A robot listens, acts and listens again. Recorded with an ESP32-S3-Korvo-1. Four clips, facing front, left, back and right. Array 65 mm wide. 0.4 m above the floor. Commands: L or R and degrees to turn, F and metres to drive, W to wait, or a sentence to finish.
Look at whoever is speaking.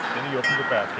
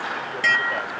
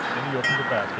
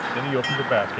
R65
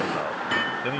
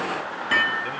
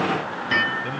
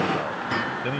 R30
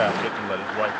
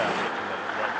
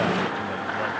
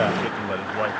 R30
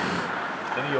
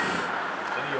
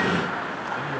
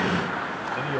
Found it: a man speaking, straight ahead.